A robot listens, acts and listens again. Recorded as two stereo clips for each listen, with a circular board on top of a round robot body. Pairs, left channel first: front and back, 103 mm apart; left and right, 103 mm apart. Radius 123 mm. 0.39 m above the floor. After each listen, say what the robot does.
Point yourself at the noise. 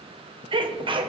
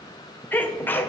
Turn 160° left.
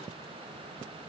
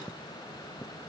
I heard a sneeze from this way, but can't make it out now.